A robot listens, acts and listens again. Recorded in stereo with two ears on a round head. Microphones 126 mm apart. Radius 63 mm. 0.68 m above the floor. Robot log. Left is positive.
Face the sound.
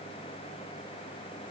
cmd idle
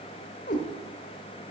note: The cat meowing: about 60° left or 120° left.
cmd yaw +60
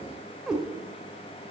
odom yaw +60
end: Facing the cat meowing, 1 to 2 m away.